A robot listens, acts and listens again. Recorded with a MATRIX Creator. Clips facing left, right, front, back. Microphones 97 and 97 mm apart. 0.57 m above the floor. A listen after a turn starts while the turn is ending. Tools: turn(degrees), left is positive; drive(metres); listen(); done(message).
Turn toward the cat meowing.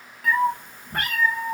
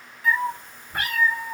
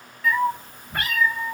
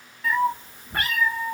turn(degrees=125)
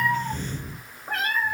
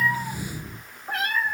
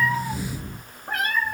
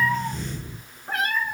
turn(degrees=40)
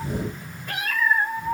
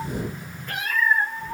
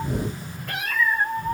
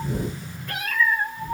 turn(degrees=15)
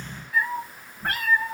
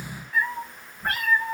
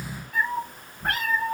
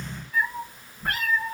done("Facing the cat meowing.")